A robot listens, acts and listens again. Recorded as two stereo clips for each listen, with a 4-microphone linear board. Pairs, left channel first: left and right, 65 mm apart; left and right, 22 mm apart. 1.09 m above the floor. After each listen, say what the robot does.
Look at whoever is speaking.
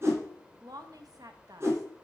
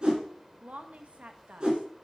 Turn 75° right.
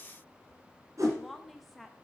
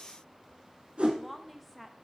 Found it: a woman speaking, straight ahead.